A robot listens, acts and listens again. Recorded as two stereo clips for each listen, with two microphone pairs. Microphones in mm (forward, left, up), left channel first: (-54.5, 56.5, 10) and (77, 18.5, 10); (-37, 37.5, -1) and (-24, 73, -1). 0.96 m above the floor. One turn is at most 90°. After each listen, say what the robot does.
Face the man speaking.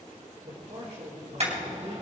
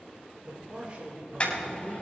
Turn 20° left.
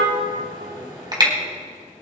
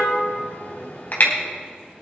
Keep listening.
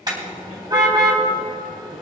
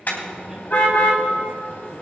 Keep listening.
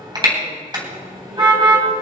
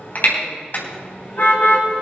Facing where the man speaking came from. I can't hear it now.